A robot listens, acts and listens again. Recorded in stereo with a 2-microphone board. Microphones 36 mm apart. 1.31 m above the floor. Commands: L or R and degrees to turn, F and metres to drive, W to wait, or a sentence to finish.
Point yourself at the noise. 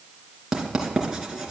R15
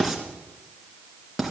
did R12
Facing the writing.